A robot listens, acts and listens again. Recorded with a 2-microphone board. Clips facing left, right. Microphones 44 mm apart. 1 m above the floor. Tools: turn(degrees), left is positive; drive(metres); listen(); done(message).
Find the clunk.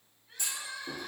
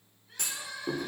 turn(degrees=-60)
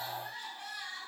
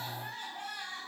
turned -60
listen()
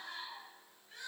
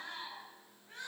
done("I heard a clunk, but can't make it out now. It was about straight ahead or 60° right.")